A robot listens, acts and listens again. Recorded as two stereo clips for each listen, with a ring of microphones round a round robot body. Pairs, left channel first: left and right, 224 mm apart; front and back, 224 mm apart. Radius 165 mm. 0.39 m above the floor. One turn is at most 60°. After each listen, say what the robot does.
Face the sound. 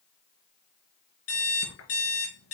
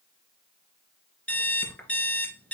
Turn 60° left.
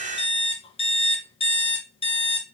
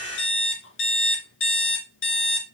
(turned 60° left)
Turn 25° left.
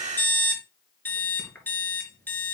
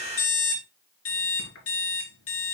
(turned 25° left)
Turn 10° left.
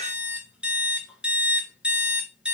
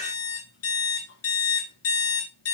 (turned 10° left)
Found it: an alarm clock, straight ahead.